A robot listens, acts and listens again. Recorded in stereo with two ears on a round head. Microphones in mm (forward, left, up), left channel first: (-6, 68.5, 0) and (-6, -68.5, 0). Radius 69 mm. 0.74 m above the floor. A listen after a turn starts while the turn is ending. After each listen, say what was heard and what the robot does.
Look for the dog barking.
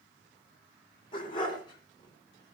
The dog barking: about 35° left or 145° left. Turn 35° left.
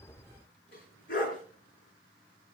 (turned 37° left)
So it is at 120° left. Turn 120° left.
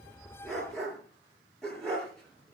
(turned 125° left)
Facing the dog barking, over 4 m away.